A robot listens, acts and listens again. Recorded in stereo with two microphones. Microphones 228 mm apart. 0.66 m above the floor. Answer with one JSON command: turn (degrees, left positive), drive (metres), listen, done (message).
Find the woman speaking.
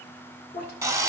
{"turn": 45}
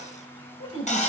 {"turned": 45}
{"turn": 105}
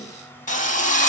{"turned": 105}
{"listen": true}
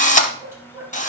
{"turn": -10}
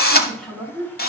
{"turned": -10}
{"done": "Facing the woman speaking."}